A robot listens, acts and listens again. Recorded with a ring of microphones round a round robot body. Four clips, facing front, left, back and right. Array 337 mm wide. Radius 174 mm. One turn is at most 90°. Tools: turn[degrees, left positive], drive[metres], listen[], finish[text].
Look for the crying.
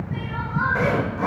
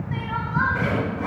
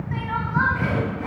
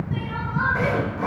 Thought: The crying: 165° left.
Action: turn[90]
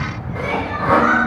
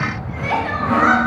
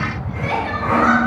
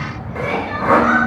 Thought: The crying is now 115° left.
Action: turn[90]
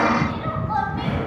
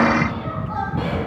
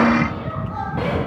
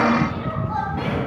Action: finish[Found it: crying, straight ahead, 2 to 4 m away.]